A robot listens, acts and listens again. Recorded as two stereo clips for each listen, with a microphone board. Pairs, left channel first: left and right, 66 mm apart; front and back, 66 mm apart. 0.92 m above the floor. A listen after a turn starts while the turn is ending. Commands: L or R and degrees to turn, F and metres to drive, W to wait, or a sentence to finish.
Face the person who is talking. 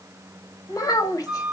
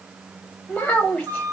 L65
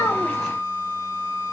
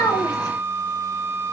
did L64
W
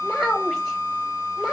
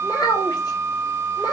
Facing the child speaking, 1 to 2 m away.